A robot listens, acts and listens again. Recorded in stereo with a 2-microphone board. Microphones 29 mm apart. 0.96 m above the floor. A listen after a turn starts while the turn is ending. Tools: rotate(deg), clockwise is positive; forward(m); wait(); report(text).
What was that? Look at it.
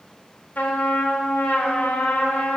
rotate(-90)
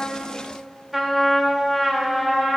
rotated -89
rotate(10)
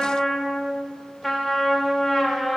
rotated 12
report("Facing the trumpet, 1 to 2 m away.")